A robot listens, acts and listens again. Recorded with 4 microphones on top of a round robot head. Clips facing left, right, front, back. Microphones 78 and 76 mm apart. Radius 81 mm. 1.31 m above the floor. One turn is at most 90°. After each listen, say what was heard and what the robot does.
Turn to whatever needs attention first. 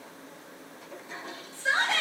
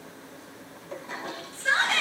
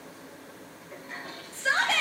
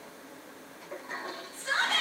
The shout: 10° left. Turn 10° left.
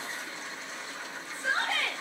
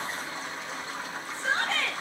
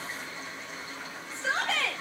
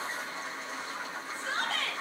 Facing the shout.